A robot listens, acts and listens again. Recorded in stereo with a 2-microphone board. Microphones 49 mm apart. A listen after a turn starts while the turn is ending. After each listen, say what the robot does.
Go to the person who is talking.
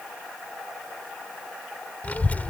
Turn 30° left.
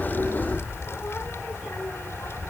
Turn 115° left.
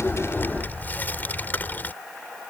Turn 40° left.
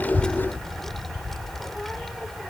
Drive 1.0 m forward.
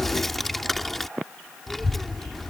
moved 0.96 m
Drive 1.0 m forward.
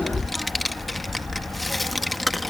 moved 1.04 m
Drive 1.0 m forward.
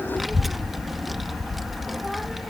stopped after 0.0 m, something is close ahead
Arrived at the child speaking, straight ahead.